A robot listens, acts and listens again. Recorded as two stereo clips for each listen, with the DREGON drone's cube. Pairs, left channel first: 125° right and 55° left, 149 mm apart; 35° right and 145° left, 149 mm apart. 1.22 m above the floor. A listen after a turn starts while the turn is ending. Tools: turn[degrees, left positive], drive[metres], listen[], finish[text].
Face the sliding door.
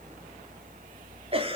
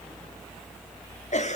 Action: listen[]
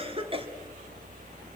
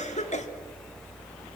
Action: listen[]
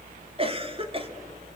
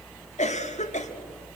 Action: finish[I can't make out a sliding door to turn to.]